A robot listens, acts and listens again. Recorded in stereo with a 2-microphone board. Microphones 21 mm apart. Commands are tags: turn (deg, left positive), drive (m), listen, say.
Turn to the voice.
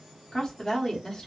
<turn deg="25"/>
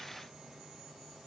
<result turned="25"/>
<listen/>
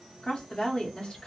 <turn deg="130"/>
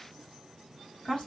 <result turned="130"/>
<turn deg="50"/>
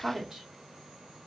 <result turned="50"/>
<say>Found it: a woman speaking, straight ahead.</say>